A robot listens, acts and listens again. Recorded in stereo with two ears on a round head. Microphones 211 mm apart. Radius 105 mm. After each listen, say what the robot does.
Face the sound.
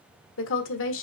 Turn 60° left.
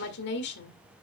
Turn 55° left.
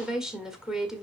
Found it: a woman speaking, straight ahead, 1 to 2 m away.